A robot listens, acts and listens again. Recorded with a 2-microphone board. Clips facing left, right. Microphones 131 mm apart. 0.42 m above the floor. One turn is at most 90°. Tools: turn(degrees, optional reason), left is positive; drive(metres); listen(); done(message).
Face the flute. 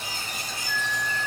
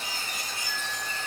turn(degrees=30)
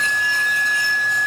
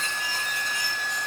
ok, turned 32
turn(degrees=-25, reason="So it is at 25° right.")
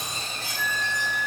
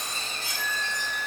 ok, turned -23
done("Facing the flute.")